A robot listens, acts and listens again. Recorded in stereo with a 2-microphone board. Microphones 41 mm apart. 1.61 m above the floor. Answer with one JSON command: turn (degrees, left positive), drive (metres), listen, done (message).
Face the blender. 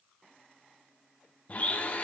{"turn": 35}
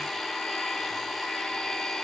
{"done": "Found it: a blender, straight ahead, under 1 m away."}